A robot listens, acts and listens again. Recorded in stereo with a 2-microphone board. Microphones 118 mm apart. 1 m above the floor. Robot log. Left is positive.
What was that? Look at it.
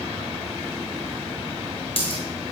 note: The dropped coin: about 50° left or 130° left.
cmd yaw +50
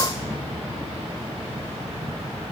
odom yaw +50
cmd idle
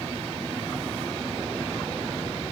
end: I heard a dropped coin, but can't make it out now. It was about straight ahead or 80° left.